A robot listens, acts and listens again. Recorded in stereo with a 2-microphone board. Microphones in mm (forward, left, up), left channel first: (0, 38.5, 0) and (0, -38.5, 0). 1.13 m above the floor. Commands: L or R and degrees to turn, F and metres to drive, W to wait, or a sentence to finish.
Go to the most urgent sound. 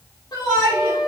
L65
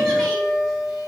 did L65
W
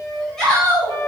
F1.0
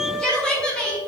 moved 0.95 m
L10
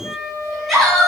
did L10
F1.0
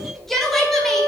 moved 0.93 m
F1.0
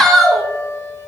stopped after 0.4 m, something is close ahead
Arrived at the shout, straight ahead.